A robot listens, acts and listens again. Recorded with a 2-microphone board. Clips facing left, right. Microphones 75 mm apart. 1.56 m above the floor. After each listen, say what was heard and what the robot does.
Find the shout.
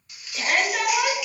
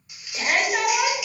Turn 30° right.
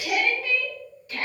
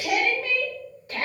So it is at 140° right. Turn 140° right.
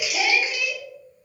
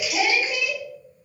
The shout is now 50° right. Turn 50° right.
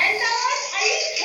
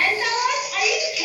Found it: a shout, straight ahead, 1 to 2 m away.